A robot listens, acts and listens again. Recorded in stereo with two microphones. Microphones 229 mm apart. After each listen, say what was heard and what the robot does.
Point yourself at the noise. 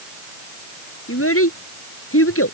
The child speaking: about 70° left or 110° left. Turn 70° left.
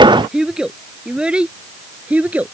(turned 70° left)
Facing the child speaking.